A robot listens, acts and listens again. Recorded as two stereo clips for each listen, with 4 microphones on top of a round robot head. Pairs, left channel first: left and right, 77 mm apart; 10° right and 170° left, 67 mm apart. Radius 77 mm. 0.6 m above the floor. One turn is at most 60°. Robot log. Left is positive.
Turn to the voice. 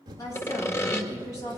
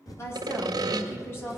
note: The woman speaking: 45° left.
cmd yaw +45
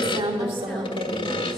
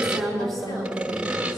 cmd idle
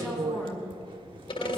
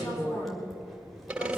end: Found it: a woman speaking, straight ahead.